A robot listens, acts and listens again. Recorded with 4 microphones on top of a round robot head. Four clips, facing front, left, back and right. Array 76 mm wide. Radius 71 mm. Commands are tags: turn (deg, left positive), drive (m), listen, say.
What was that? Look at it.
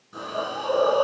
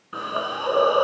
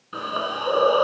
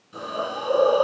<turn deg="130"/>
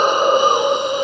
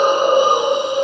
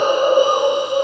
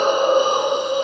<turn deg="15"/>
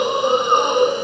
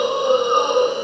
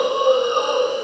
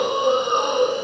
<say>Found it: a hiss, straight ahead.</say>